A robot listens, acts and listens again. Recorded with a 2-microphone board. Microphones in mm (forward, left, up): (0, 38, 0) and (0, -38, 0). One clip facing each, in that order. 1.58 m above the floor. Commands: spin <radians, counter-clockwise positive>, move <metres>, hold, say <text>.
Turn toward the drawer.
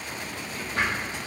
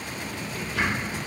spin 0.70
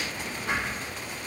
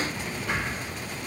spin 1.66
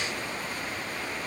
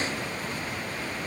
hold
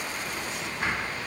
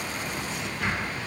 spin 0.52
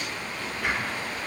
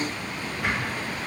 spin -0.17
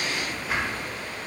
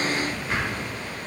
say Facing the drawer.